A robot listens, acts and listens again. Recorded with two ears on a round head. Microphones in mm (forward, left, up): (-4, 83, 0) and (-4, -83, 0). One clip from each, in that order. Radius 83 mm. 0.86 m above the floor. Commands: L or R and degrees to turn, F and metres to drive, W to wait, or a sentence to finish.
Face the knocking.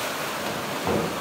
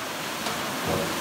L75
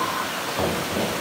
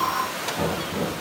L30
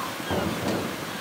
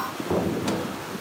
Facing the knocking, over 4 m away.